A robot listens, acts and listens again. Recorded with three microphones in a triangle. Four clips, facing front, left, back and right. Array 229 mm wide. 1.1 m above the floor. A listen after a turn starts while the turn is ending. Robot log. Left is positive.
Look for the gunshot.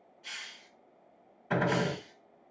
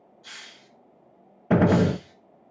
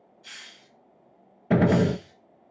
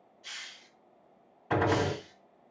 note: The gunshot: 135° left.
cmd yaw +135
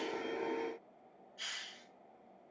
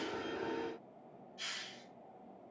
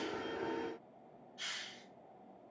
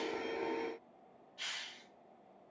end: Facing where the gunshot came from. I can't hear it now.